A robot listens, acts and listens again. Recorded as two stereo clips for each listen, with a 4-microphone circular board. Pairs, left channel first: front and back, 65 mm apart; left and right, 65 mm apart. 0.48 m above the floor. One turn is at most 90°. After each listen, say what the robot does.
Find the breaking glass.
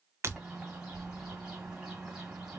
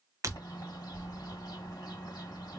Turn 90° right.
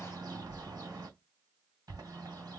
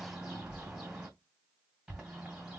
Turn 40° right.
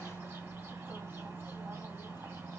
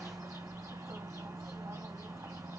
I heard breaking glass from this way, but can't make it out now.